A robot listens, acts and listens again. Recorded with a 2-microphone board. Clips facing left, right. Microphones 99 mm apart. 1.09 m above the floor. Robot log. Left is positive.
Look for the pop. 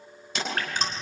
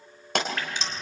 note: The pop: about 65° right or 115° right.
cmd yaw -65
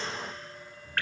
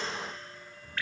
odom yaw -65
cmd idle
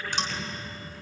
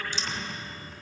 end: I heard a pop, but can't make it out now. It was about straight ahead or 50° right.